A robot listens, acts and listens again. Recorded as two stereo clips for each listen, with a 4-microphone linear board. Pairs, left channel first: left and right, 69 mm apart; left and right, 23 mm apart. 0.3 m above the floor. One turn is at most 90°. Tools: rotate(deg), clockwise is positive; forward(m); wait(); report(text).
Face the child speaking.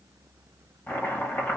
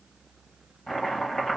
wait()
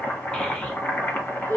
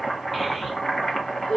rotate(-35)
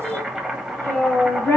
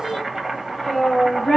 rotate(-35)
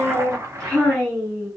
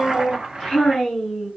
rotate(-15)
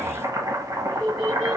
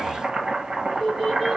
report("Facing the child speaking.")